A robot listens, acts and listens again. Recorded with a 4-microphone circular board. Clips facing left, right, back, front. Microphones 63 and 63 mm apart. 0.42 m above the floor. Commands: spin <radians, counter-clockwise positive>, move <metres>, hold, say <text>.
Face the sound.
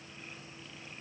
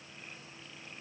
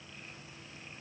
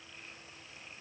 hold
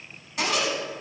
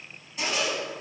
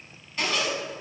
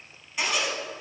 spin 1.40
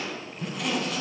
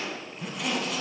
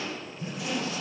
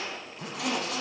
say Found it: a zipper, straight ahead, 1 to 2 m away.